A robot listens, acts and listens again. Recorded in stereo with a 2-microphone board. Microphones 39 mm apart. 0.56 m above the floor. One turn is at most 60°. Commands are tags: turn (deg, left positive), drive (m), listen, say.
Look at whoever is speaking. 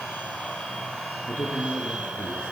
<turn deg="60"/>
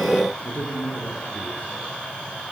<turn deg="50"/>
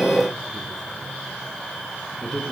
<turn deg="10"/>
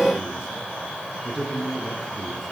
<say>Found it: a man speaking, straight ahead.</say>